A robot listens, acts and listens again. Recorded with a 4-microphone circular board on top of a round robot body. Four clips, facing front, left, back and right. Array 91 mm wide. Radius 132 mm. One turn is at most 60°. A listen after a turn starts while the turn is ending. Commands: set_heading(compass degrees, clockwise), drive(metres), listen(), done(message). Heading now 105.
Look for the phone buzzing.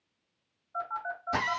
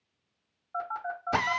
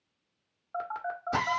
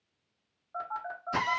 set_heading(45)
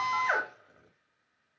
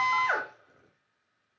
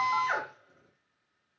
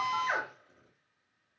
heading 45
set_heading(345)
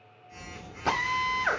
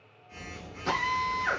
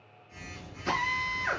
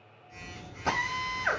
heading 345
set_heading(290)
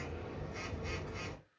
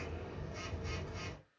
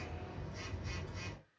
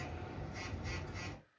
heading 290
set_heading(275)
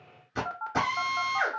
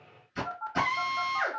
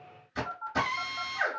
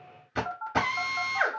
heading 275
done("Found it: a phone buzzing, straight ahead, 1 to 2 m away.")